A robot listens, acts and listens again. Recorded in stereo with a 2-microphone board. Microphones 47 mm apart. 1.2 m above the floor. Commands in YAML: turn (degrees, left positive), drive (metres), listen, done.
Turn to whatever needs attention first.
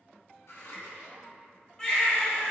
turn: 30
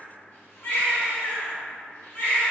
turn: 135
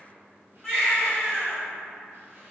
turn: 20
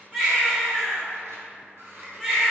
done: "Facing the baby crying, 1 to 2 m away."